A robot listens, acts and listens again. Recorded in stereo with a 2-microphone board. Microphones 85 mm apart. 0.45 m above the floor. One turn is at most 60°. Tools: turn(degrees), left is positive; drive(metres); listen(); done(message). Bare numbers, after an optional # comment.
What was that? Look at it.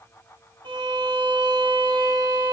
turn(-60)
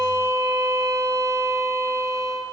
# So it is at 40° right.
turn(-40)
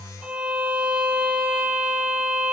# The violin is now 15° right.
turn(-15)
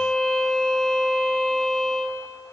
done("Facing the violin.")